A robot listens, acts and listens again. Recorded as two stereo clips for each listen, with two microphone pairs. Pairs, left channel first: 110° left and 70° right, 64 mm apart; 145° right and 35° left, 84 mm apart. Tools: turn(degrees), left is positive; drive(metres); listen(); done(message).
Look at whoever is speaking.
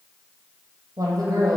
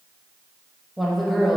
turn(degrees=-60)
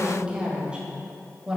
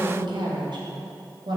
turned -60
done("Facing the woman speaking.")